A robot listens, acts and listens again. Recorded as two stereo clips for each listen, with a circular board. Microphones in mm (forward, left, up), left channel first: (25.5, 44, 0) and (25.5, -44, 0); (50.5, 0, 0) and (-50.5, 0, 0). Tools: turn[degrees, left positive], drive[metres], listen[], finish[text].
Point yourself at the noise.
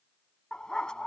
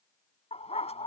Thought: The dog barking: 10° left.
Action: turn[10]
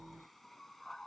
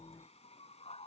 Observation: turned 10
Action: finish[Facing the dog barking.]